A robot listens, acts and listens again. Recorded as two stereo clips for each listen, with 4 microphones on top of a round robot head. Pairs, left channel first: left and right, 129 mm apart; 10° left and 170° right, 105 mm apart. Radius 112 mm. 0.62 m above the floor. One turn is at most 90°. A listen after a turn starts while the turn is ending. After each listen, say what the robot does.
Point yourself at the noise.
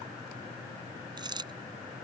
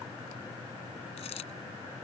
Turn 35° right.
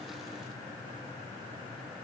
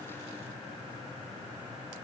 I heard a dropped coin from this way, but can't make it out now.